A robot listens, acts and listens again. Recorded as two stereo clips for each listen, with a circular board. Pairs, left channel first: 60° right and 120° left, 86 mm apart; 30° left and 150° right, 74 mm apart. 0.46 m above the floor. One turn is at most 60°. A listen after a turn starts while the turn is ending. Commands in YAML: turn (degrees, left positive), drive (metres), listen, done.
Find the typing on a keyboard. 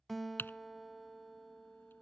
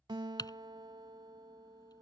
done: "Facing the typing on a keyboard."